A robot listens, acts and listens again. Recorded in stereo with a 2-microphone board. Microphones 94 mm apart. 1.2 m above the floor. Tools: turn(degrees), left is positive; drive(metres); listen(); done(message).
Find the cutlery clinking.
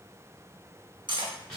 turn(degrees=-55)
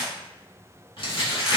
listen()
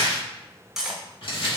done("Facing the cutlery clinking, under 1 m away.")